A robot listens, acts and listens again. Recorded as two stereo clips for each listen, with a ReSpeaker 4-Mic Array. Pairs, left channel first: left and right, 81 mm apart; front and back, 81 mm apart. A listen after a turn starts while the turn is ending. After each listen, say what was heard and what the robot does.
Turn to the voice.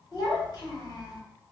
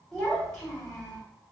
The child speaking: 85° left. Turn 85° left.
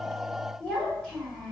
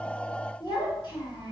The child speaking is now 10° left. Turn 10° left.
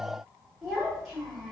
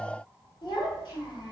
Found it: a child speaking, straight ahead.